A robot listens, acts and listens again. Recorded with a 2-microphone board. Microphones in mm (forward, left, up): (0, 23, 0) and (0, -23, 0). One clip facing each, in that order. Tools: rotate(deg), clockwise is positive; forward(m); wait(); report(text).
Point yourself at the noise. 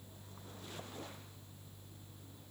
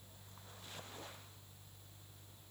wait()
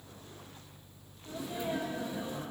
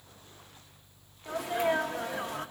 rotate(90)
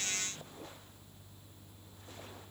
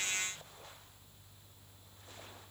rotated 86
report("I heard a sneeze from this way, but can't make it out now.")